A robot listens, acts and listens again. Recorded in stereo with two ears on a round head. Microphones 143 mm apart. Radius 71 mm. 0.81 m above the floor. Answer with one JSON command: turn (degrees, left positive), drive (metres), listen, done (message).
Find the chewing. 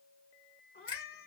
{"listen": true}
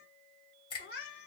{"listen": true}
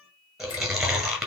{"turn": -30}
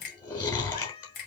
{"turn": 25}
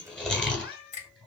{"done": "Found it: chewing, straight ahead."}